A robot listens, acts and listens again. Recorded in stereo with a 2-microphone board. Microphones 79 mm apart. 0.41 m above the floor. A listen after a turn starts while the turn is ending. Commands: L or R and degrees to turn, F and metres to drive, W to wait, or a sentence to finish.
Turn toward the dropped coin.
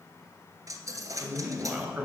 R50
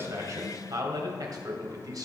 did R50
W
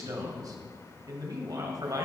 I heard a dropped coin, but can't make it out now. It was about straight ahead or 80° right.